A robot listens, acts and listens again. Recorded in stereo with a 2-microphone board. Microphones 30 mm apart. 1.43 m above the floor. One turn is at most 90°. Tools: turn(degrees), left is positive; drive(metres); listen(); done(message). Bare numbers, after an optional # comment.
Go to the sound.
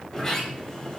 # The sliding door: about 20° left or 160° left.
turn(20)
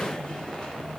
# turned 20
# So it is at 135° left.
turn(90)
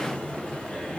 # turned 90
# The sliding door is now 55° left.
turn(55)
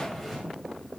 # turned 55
# The sliding door is now 10° left.
turn(10)
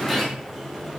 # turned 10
drive(1.0)
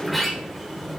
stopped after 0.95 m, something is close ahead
done("Arrived at the sliding door, straight ahead.")